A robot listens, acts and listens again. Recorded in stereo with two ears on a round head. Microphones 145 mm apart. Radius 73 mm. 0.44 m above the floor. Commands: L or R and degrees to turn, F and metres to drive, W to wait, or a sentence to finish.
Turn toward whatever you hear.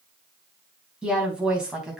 R30
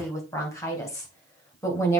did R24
L20
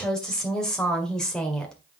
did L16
Found it: a woman speaking, straight ahead.